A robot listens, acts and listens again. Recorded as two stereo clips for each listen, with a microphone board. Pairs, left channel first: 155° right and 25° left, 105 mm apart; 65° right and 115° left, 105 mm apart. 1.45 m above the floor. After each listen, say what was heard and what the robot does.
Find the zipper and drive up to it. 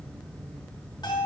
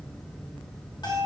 Keep listening.
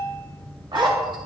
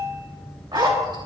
The zipper: 65° left. Turn 65° left.
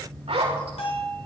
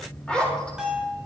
The zipper is now 10° left. Turn 10° left.
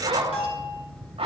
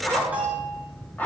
Drive 1.0 m forward.
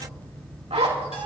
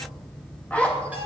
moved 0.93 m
The zipper is now 10° left. Turn 10° left.
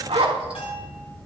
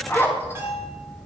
Drive 1.0 m forward.
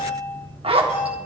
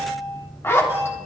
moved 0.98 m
Drive 1.0 m forward.
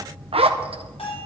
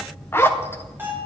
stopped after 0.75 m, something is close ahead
Arrived at the zipper, straight ahead.